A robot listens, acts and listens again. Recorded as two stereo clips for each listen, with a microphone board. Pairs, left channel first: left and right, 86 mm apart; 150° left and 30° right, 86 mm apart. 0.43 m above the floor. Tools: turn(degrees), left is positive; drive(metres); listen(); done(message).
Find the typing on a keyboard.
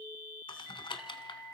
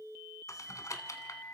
turn(degrees=100)
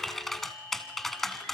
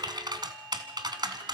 done("Facing the typing on a keyboard, 1 to 2 m away.")